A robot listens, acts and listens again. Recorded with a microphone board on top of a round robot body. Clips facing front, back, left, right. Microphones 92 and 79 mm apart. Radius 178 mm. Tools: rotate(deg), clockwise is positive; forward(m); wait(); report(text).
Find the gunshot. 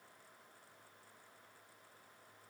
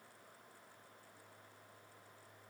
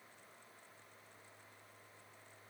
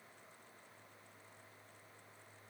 wait()
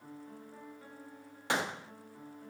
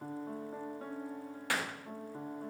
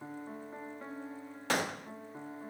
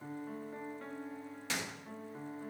rotate(-65)
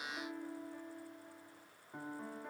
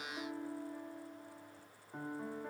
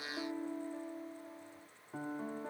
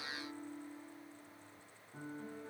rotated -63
report("Facing where the gunshot came from. I can't hear it now.")